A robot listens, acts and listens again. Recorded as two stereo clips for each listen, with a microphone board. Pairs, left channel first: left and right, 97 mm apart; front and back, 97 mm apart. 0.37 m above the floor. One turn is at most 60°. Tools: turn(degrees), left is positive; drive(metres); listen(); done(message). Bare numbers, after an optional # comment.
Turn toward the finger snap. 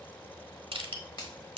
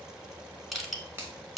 # The finger snap: 120° left.
turn(60)
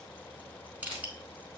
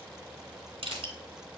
# Nothing new. It was at 60° left.
turn(60)
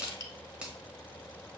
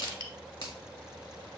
# The finger snap is now 15° right.
turn(-15)
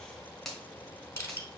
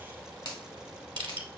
done("Facing the finger snap.")